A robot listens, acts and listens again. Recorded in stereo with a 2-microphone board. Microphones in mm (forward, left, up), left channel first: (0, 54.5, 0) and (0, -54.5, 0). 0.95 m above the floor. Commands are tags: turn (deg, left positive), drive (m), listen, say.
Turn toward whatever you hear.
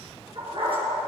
<turn deg="-60"/>
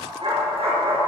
<turn deg="-60"/>
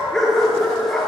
<say>Found it: a dog barking, straight ahead, 2 to 4 m away.</say>